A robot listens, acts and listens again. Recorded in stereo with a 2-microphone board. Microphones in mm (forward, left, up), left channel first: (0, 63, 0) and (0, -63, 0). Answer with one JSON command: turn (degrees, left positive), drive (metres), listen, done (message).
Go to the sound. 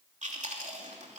{"turn": -70}
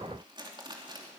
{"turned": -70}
{"turn": -40}
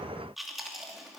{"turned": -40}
{"drive": 1.0}
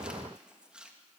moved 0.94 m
{"turn": -10}
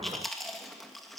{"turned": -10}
{"drive": 1.0}
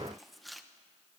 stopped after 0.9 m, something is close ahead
{"done": "Arrived at the chewing, straight ahead."}